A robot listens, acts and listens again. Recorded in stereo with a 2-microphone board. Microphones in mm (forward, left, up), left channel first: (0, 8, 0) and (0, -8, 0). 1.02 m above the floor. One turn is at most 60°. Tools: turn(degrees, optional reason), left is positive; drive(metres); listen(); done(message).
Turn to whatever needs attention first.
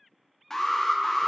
turn(degrees=30, reason="The alarm: about 30° left or 150° left.")
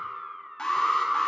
turn(degrees=60, reason="So it is at 120° left.")
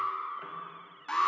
turn(degrees=60, reason="The alarm is now 60° left.")
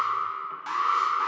done("Found it: an alarm, straight ahead, 1 to 2 m away.")